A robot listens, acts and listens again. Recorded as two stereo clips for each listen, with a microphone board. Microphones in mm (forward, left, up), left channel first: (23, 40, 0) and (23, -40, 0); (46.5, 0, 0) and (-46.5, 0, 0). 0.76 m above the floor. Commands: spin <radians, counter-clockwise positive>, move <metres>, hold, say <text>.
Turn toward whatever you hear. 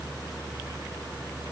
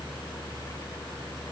hold
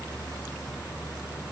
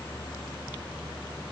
hold
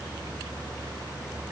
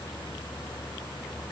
say I can't make out anything.